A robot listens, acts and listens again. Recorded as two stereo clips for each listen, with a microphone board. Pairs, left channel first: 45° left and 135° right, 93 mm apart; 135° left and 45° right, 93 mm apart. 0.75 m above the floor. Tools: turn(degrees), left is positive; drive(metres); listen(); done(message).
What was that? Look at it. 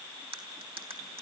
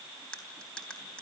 turn(degrees=-145)
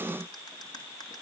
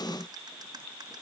listen()
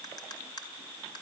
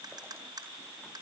done("Facing the cutlery clinking, 2 to 4 m away.")